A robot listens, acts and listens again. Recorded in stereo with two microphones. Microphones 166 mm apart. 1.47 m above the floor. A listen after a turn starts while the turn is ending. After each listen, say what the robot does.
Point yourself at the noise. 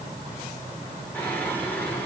Turn 30° left.
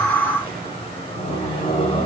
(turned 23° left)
Turn 145° left.
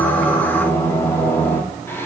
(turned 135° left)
Turn 15° left.
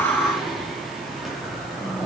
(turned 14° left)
Facing the singing.